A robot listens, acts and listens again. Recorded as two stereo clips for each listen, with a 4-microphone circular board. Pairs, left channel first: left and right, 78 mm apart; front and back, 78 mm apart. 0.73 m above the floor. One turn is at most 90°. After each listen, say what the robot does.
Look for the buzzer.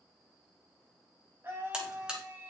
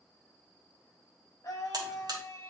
Turn 90° right.
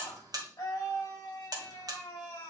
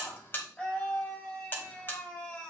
Turn 60° right.
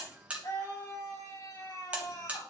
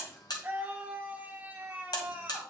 Turn 20° right.
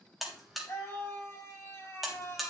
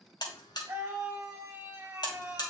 Found it: a buzzer, straight ahead.